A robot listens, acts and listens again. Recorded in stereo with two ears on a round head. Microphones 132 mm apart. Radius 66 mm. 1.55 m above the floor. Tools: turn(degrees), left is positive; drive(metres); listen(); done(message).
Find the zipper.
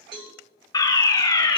listen()
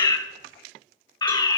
listen()
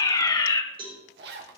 turn(degrees=-90)
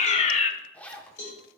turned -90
turn(degrees=10)
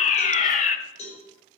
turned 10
listen()
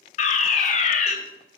listen()
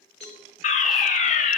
done("Facing where the zipper came from. I can't hear it now.")